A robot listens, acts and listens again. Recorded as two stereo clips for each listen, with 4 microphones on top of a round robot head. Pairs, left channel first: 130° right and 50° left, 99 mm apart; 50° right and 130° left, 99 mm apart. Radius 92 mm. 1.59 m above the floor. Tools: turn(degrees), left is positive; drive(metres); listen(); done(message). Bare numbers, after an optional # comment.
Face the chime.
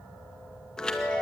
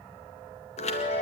# The chime: 45° right.
turn(-45)
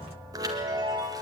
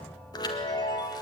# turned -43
done("Found it: a chime, straight ahead, 1 to 2 m away.")